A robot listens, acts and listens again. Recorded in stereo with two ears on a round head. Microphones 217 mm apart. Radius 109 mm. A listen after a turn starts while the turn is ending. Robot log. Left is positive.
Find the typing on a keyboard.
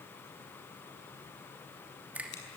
cmd idle
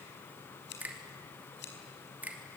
cmd idle
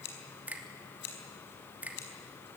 end: I can't make out typing on a keyboard, only scissors and a finger snap.